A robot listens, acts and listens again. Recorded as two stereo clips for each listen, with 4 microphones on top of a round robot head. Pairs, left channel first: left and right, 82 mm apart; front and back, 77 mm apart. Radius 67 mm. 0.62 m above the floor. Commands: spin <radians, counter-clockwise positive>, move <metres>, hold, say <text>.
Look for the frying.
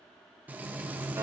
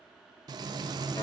spin -2.79
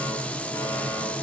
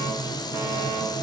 spin 0.35
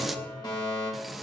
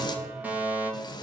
say Facing the frying.